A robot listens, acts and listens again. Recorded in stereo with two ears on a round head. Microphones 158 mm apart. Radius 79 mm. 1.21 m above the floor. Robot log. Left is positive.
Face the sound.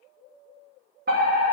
note: The fire alarm: about 55° right or 125° right.
cmd yaw -55
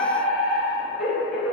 end: Facing the fire alarm, 2 to 4 m away.